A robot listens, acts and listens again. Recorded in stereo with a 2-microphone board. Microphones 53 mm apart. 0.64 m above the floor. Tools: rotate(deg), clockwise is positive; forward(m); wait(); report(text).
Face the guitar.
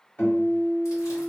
rotate(-35)
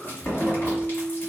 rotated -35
report("Facing the guitar.")